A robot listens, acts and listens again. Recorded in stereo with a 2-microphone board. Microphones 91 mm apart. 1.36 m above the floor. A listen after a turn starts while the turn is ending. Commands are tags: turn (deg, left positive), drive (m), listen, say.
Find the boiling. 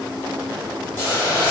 <turn deg="35"/>
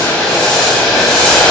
<say>Found it: boiling, straight ahead.</say>